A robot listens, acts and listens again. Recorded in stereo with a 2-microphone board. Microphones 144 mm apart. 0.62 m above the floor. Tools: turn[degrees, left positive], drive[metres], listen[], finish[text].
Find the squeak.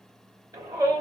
Action: listen[]
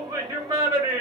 Action: listen[]
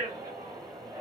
Action: finish[I can't make out a squeak to turn to.]